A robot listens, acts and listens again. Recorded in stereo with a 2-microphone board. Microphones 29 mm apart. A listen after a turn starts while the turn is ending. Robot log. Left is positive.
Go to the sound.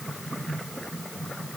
cmd idle
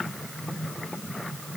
cmd idle
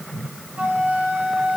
note: The flute: about 55° right or 125° right.
cmd yaw -55
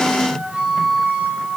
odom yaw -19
note: So it is at 40° right.
cmd yaw -40
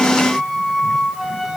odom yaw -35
note: The flute is now 15° right.
cmd yaw -15
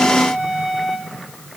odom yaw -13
cmd fwd 1.0
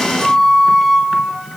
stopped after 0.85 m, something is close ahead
end: Arrived at the flute, straight ahead.